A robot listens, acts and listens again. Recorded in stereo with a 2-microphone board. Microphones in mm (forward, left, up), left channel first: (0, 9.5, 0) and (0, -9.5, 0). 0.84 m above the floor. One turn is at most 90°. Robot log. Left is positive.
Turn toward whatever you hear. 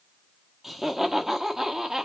note: The laughter: about 25° right or 155° right.
cmd yaw -25
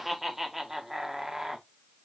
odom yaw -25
note: The laughter: about 20° right or 160° right.
cmd yaw -20
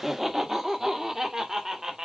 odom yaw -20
note: The laughter: about 25° right or 155° right.
cmd yaw -25
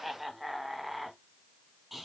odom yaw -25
end: Found it: laughter, straight ahead.